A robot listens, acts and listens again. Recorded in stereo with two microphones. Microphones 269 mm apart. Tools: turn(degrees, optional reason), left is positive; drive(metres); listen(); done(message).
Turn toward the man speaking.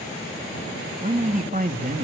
turn(degrees=-35, reason="The man speaking: about 35° right or 145° right.")
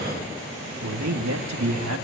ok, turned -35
turn(degrees=-100, reason="So it is at 100° right.")
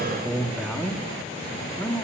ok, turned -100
turn(degrees=10, reason="The man speaking is now 10° left.")
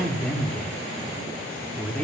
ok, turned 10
done("Found it: a man speaking, straight ahead, 2 to 4 m away.")